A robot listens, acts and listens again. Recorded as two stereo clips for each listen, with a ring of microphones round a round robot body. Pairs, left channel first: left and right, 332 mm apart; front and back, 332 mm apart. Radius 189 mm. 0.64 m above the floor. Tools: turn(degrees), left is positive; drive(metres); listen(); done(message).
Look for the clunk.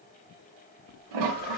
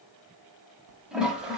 listen()
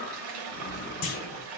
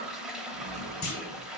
turn(degrees=65)
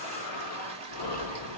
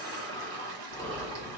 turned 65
done("I heard a clunk from this way, but can't make it out now.")